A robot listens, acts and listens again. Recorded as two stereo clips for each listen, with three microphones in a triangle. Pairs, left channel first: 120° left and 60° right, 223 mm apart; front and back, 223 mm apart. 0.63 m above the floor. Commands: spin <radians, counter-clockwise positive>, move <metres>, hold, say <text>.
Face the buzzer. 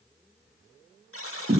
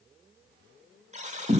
spin 2.18
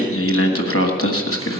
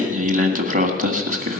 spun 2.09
hold
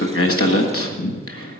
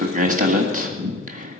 hold
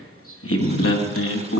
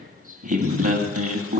say Facing where the buzzer came from. I can't hear it now.